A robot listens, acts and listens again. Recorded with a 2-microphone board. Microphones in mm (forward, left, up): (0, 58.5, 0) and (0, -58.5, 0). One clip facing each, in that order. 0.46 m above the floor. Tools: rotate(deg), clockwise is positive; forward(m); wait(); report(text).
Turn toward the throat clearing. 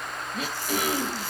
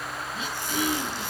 rotate(-60)
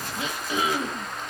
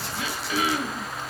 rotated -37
rotate(-25)
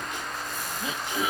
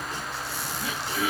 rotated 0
rotate(-20)
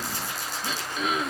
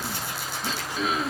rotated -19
report("Facing the throat clearing.")